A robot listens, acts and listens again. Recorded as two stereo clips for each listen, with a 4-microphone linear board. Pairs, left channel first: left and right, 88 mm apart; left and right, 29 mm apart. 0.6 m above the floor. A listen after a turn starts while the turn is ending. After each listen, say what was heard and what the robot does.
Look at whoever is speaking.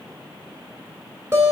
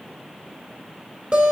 Keep listening.
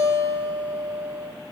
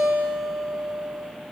Keep listening.
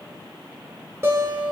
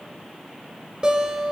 I can't make out anyone speaking to turn to.